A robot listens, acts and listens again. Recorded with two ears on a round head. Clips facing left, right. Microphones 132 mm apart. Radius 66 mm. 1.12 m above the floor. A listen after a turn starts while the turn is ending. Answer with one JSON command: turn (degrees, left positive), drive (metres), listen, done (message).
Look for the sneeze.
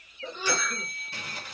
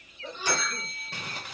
{"turn": 90}
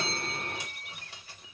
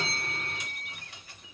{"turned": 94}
{"done": "I heard a sneeze from this way, but can't make it out now."}